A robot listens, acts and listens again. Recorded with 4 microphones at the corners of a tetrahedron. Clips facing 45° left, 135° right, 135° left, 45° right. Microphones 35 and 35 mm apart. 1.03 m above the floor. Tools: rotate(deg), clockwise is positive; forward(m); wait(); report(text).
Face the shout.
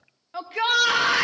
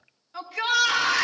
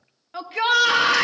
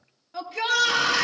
rotate(-90)
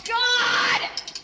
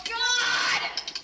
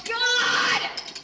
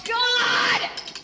report("Found it: a shout, straight ahead, under 1 m away.")